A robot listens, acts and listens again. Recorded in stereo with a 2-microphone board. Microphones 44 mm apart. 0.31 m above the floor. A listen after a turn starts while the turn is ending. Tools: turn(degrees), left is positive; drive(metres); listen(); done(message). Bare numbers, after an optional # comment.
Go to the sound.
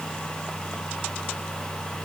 listen()
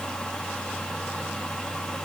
listen()
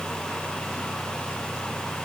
done("I can't make out anything to turn to.")